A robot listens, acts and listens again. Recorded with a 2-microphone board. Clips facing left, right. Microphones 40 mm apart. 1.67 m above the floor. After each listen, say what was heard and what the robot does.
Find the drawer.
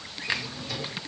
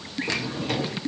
The drawer: about 55° right or 125° right. Turn 55° right.
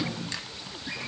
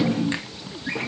So it is at 60° right. Turn 60° right.
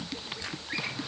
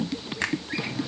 Facing the drawer.